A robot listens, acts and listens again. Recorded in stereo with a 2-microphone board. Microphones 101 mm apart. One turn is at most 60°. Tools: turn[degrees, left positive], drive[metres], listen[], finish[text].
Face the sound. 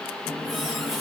Action: turn[30]
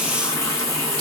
Thought: So it is at 150° left.
Action: turn[60]
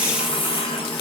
Thought: The running tap is now 115° left.
Action: turn[60]
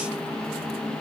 Thought: The running tap is now 65° left.
Action: turn[60]
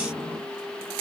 Thought: The running tap is now 15° left.
Action: turn[15]
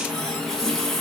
Action: finish[Facing the running tap.]